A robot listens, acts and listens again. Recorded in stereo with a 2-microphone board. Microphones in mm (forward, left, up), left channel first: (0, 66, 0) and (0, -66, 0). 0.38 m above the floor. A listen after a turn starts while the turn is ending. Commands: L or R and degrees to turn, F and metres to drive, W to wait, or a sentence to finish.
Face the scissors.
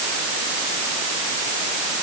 W
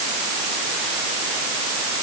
W
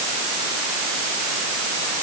I can't make out scissors.